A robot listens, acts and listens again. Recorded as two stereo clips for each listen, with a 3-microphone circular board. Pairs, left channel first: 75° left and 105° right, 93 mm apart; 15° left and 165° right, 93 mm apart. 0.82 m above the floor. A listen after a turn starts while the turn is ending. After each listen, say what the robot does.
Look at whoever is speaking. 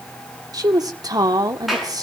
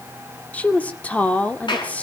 Turn 60° right.
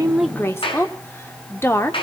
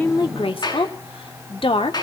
Turn 15° left.
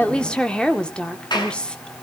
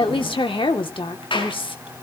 Facing the woman speaking, 2 to 4 m away.